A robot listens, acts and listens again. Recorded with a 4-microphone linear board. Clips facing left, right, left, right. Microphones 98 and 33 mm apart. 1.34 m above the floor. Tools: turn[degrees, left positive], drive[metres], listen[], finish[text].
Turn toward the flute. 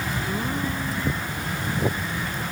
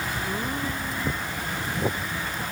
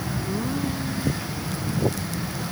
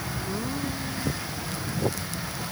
Action: listen[]
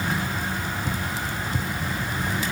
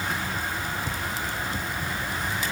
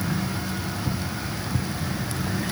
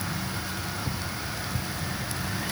Action: listen[]
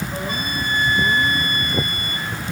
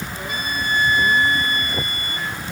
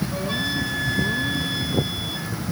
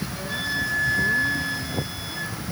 Thought: The flute: about 45° left or 135° left.
Action: turn[45]
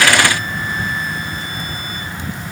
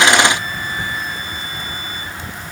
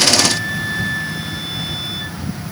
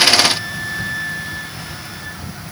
Thought: So it is at 90° left.
Action: turn[90]
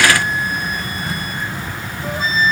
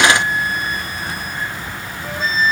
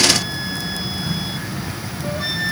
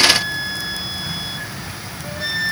Action: finish[Facing the flute.]